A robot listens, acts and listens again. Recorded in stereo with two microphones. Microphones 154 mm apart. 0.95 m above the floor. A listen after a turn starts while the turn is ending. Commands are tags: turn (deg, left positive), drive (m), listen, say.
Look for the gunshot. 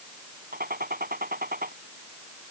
<turn deg="-90"/>
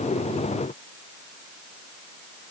<say>Facing where the gunshot came from. I can't hear it now.</say>